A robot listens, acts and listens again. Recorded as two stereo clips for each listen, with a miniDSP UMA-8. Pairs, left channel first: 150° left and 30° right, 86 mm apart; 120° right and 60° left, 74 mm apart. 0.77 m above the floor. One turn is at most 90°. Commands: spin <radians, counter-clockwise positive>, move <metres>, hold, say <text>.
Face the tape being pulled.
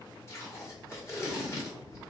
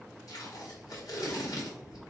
spin -1.57
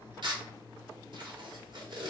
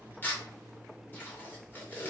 spin -0.96
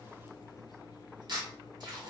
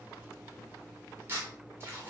say Facing the tape being pulled.